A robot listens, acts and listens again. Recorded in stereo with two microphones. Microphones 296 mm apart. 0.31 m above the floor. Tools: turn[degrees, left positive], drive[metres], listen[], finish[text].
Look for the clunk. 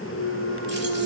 Thought: The clunk: about 25° left or 155° left.
Action: turn[25]
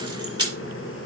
Action: listen[]
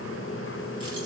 Action: finish[I heard a clunk, but can't make it out now. It was about straight ahead or 130° left.]